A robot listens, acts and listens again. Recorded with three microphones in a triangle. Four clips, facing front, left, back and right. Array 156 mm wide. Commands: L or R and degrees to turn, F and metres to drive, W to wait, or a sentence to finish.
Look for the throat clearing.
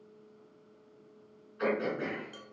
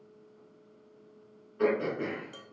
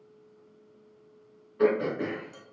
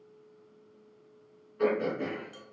L175
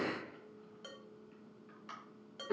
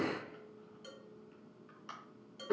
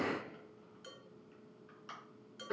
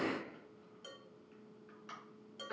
L70
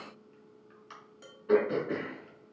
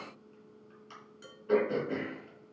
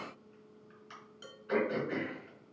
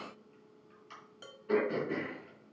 Found it: throat clearing, straight ahead, 2 to 4 m away.